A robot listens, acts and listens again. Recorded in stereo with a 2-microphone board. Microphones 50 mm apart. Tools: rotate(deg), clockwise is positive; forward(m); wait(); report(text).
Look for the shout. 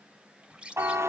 wait()
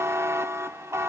wait()
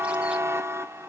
report("I can't make out a shout to turn to.")